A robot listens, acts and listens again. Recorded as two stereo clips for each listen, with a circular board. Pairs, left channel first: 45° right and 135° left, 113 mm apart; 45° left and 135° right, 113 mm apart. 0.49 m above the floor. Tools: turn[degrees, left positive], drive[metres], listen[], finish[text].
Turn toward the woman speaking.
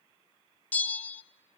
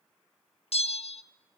Action: listen[]
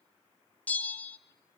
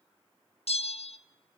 Action: listen[]
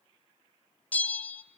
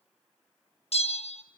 Action: finish[I can't make out a woman speaking to turn to.]